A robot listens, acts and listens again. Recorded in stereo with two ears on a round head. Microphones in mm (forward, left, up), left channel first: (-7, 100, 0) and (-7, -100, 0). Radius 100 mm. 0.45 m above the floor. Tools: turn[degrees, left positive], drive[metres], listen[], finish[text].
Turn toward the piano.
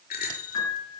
Action: turn[90]
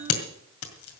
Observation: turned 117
Thought: Nothing new. It was at 25° right.
Action: turn[-25]
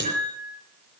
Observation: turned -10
Thought: The piano is now 25° right.
Action: turn[-25]
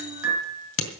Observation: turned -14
Thought: The piano is now 10° right.
Action: turn[-10]
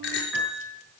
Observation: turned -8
Action: finish[Facing the piano.]